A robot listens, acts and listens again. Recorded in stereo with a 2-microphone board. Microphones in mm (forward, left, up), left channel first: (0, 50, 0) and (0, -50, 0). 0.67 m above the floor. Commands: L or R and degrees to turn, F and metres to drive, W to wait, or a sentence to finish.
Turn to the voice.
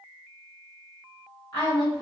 L50
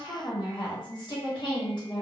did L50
L65
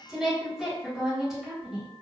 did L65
Facing the woman speaking, 1 to 2 m away.